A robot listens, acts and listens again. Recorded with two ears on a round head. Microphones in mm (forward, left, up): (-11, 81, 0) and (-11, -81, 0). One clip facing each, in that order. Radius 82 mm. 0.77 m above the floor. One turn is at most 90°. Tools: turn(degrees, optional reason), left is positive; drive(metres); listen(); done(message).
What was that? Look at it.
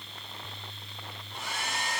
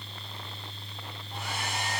turn(degrees=-50, reason="The hair dryer: about 50° right or 130° right.")
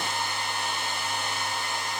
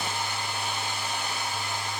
turn(degrees=-10, reason="So it is at 10° right.")
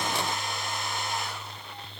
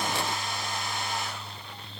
done("Found it: a hair dryer, straight ahead, 2 to 4 m away.")